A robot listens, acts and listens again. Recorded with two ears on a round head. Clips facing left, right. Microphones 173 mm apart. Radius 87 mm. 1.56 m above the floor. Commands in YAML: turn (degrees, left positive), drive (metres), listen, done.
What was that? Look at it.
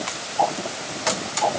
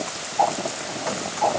turn: 30
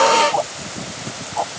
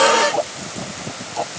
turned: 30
turn: -25
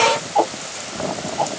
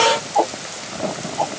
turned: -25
done: "Facing the ticking."